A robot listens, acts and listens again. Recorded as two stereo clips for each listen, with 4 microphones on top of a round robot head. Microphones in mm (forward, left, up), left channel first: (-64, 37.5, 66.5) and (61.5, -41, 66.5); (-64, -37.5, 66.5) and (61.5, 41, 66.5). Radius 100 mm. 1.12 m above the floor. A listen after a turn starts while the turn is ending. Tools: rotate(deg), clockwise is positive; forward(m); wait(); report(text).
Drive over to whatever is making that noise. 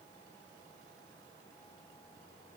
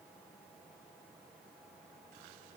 wait()
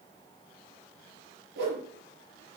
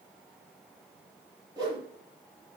rotate(40)
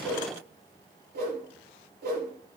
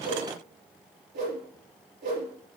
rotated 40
forward(1.0)
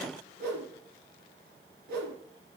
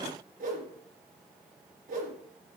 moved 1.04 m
forward(1.0)
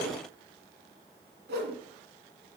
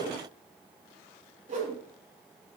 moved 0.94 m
rotate(10)
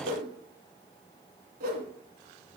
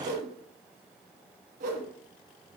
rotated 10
forward(1.0)
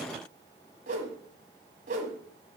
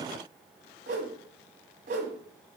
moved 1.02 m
forward(1.0)
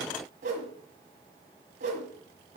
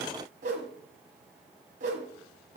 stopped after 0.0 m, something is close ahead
report("I am next to the whoosh.")